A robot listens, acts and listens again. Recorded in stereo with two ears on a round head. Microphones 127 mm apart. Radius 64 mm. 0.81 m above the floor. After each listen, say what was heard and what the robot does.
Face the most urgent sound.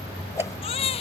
The baby crying: about 40° left or 140° left. Turn 40° left.
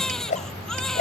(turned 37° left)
Facing the baby crying.